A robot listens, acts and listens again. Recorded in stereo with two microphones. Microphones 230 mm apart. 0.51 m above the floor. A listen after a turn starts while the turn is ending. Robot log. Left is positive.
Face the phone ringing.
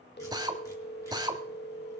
note: The phone ringing: about 45° left or 135° left.
cmd yaw +45
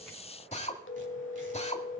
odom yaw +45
note: So it is at 75° left.
cmd yaw +75
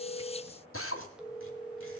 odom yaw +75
end: Facing the phone ringing.